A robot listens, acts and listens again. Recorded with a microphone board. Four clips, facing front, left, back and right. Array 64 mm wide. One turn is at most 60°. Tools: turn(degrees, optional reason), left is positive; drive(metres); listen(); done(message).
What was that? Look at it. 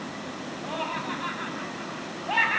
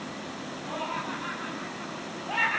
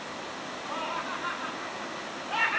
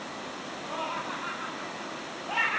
done("Facing the laughter.")